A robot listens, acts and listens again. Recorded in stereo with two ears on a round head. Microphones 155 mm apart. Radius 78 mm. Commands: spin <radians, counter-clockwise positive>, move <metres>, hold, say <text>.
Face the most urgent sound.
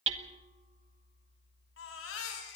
spin 1.57
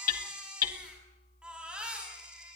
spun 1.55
say Found it: a baby crying, straight ahead, over 4 m away.